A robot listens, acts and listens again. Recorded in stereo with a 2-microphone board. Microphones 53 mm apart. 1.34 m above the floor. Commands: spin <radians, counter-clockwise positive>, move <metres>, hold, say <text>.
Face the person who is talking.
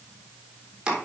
hold
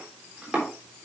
hold
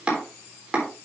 say I can't make out anyone speaking to turn to.